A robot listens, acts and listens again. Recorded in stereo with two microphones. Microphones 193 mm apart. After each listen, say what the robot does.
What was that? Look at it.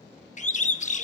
Turn 40° left.
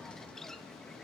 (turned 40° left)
Keep listening.
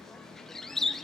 Found it: a bird, straight ahead.